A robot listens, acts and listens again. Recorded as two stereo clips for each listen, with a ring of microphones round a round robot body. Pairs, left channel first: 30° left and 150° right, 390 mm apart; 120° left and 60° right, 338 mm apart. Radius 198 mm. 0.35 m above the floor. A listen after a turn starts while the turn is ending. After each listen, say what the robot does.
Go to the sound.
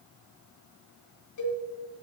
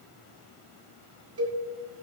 Turn 15° right.
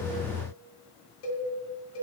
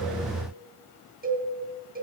Drive 1.0 m forward.
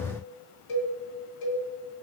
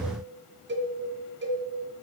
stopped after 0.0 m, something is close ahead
Something is in my way. I am facing the cowbell but have not reached it.